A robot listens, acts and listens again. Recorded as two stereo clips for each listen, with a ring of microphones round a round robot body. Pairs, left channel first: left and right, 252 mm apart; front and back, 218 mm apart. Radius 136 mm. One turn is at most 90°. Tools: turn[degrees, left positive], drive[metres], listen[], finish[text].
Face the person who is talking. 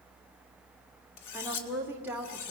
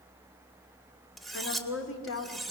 Action: finish[Found it: a woman speaking, straight ahead, 2 to 4 m away.]